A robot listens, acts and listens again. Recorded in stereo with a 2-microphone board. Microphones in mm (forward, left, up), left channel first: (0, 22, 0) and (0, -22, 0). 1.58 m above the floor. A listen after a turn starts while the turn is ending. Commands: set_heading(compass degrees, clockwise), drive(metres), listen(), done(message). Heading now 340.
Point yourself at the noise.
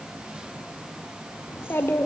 set_heading(285)
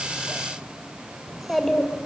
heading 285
done("Found it: a child speaking, straight ahead.")